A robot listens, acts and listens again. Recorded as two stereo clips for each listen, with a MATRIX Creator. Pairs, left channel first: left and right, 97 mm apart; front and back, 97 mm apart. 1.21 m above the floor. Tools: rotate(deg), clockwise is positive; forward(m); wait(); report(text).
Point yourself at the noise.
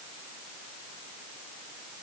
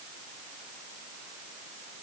wait()
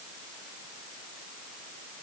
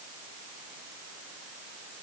wait()
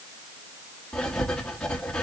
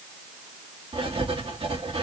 rotate(-170)
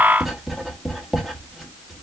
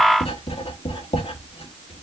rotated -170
report("Found it: writing, straight ahead.")